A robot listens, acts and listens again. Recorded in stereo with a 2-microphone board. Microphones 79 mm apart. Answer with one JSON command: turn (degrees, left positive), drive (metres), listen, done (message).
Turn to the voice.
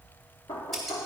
{"listen": true}
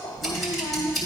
{"turn": 70}
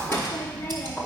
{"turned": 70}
{"turn": 30}
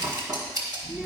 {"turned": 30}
{"turn": -15}
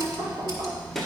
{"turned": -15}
{"done": "Found it: a child speaking, straight ahead, 1 to 2 m away."}